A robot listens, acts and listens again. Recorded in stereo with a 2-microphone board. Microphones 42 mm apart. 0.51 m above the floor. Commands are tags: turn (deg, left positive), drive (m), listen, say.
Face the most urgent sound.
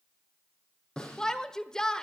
<turn deg="15"/>
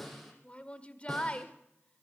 <turn deg="150"/>
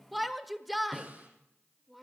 <say>Found it: a shout, straight ahead, 1 to 2 m away.</say>